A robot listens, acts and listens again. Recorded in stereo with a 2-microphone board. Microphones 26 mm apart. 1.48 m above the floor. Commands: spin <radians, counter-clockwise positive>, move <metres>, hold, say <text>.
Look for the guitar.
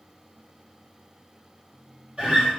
spin -0.70
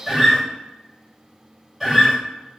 say Found it: a guitar, straight ahead, 1 to 2 m away.